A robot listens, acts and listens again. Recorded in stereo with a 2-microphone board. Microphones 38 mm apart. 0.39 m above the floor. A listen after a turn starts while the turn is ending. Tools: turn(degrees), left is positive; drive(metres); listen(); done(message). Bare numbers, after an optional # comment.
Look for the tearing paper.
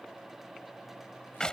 listen()
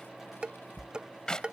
listen()
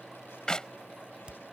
done("I can't make out tearing paper, only dishes clattering and a clap.")